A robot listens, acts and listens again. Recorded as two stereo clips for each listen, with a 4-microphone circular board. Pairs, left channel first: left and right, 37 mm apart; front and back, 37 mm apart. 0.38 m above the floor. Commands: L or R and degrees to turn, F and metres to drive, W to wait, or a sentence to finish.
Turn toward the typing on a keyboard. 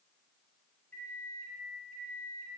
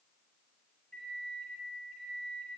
W
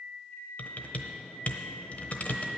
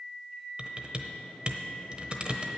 L125
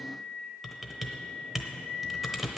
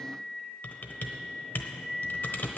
Found it: typing on a keyboard, straight ahead, 1 to 2 m away.